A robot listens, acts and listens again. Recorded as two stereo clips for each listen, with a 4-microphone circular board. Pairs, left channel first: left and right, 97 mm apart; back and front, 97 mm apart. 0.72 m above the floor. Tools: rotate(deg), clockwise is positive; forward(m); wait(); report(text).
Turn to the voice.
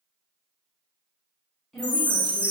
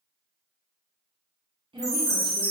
report("Found it: a woman speaking, straight ahead, under 1 m away.")